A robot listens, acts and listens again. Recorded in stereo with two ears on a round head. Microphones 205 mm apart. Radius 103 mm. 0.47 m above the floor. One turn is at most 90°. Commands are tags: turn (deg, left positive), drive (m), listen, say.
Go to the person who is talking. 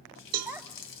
<turn deg="-30"/>
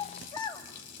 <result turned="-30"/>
<turn deg="20"/>
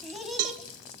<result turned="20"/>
<drive m="1.0"/>
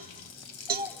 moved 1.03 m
<turn deg="-10"/>
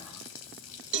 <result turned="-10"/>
<listen/>
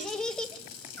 <drive m="1.0"/>
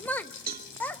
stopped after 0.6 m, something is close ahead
<turn deg="10"/>
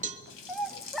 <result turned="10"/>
<say>I am next to the child speaking.</say>